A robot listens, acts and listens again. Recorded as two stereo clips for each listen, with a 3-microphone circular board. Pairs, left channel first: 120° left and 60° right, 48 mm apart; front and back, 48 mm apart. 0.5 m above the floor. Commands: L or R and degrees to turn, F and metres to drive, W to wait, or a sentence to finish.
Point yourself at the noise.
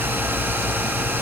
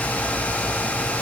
W
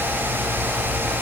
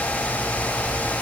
W
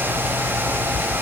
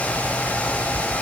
I can't make out anything.